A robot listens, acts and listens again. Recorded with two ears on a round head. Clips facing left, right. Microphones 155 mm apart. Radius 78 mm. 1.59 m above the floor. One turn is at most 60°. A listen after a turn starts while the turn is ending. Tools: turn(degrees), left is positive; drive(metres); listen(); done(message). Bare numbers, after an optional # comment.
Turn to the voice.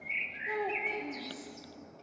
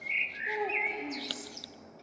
turn(-30)
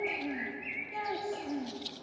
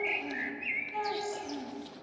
# So it is at 20° left.
turn(20)
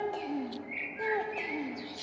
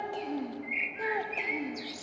done("Found it: a child speaking, straight ahead, 1 to 2 m away.")